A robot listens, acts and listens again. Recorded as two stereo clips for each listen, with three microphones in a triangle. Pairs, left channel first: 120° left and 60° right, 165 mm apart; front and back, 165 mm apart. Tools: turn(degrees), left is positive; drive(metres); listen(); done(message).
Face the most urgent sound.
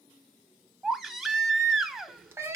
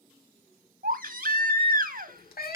turn(degrees=-150)
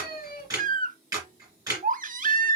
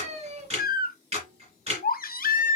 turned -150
turn(degrees=-30)
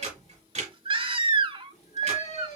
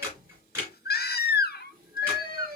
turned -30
done("Found it: a baby crying, straight ahead, under 1 m away.")